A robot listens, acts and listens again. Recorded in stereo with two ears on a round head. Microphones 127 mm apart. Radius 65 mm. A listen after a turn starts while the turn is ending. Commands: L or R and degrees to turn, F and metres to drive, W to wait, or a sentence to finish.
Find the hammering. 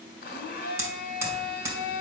R20
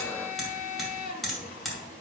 Facing the hammering, 1 to 2 m away.